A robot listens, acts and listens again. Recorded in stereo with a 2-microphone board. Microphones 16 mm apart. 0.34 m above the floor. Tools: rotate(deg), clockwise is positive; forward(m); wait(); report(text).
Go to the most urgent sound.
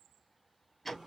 wait()
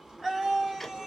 rotate(65)
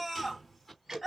rotate(25)
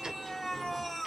rotate(-15)
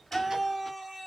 forward(1.0)
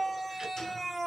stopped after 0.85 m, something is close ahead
rotate(10)
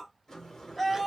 report("Arrived at the scream, straight ahead.")